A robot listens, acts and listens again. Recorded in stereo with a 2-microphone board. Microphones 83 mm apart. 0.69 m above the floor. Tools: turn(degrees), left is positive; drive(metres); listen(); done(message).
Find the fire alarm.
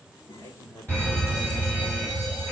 turn(degrees=30)
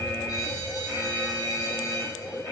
turn(degrees=140)
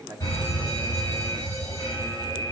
turn(degrees=40)
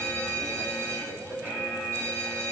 turn(degrees=-25)
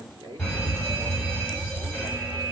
turn(degrees=15)
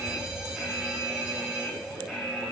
done("Found it: a fire alarm, straight ahead, over 4 m away.")